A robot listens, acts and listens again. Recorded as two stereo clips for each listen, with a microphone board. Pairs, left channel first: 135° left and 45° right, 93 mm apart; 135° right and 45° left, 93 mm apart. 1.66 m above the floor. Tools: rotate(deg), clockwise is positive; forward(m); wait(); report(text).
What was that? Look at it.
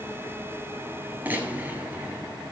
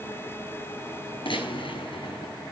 rotate(115)
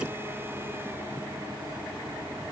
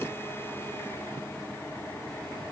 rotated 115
report("Facing where the gunshot came from. I can't hear it now.")